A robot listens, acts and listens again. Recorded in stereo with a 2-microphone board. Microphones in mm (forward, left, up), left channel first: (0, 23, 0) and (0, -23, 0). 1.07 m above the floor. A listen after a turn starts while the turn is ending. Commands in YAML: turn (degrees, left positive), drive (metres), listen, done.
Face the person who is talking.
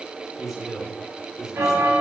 turn: -30
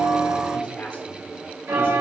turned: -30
listen: true
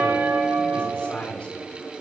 turn: 20
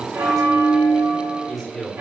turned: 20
done: "Facing the man speaking, 2 to 4 m away."